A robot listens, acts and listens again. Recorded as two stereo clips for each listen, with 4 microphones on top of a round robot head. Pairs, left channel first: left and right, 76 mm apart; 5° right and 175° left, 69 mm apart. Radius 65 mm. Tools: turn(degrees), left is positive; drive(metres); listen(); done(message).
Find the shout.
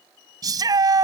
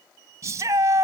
turn(degrees=-125)
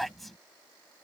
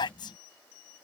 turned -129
done("Found it: a shout, straight ahead.")